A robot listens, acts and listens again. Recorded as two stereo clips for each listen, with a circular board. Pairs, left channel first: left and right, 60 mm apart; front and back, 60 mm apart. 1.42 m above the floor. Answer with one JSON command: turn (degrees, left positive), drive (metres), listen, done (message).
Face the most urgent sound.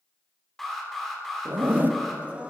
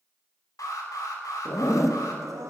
{"done": "Found it: an alarm, straight ahead, 2 to 4 m away."}